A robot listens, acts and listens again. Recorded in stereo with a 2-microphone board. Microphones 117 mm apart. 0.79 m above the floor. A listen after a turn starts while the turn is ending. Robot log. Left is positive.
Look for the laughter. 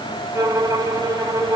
cmd idle
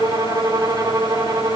cmd idle
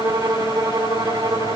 end: I can't make out laughter, only a violin.